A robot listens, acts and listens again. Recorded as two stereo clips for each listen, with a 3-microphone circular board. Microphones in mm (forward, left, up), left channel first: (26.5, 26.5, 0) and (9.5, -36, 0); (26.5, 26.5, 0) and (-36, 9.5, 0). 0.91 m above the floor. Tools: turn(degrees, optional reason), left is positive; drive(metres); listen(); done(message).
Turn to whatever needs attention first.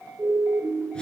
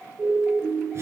turn(degrees=-105, reason="The siren: 105° right.")
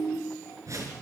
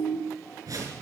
turn(degrees=-40, reason="The siren is now 40° right.")
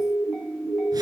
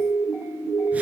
done("Found it: a siren, straight ahead.")